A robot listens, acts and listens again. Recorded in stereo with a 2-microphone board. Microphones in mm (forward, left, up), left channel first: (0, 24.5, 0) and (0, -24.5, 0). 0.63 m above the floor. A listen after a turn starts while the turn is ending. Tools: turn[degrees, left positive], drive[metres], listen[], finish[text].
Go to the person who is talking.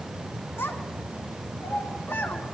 Thought: The child speaking: about 65° left or 115° left.
Action: turn[65]
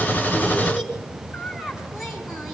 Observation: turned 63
Action: drive[1.0]
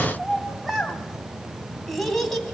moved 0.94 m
Action: drive[1.0]
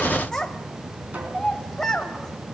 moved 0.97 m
Thought: The child speaking is now 15° left.
Action: turn[15]
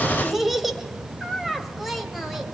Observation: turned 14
Action: drive[1.0]
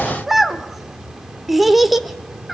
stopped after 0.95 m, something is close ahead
Action: finish[Arrived at the child speaking, straight ahead.]